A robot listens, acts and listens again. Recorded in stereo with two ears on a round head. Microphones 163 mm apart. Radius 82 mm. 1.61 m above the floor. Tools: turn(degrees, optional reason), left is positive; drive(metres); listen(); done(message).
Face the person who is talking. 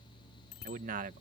turn(degrees=-50, reason="The man speaking: about 50° right or 130° right.")
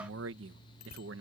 turn(degrees=-85, reason="So it is at 85° right.")
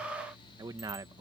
turn(degrees=-20, reason="The man speaking is now 20° right.")
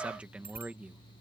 done("Found it: a man speaking, straight ahead.")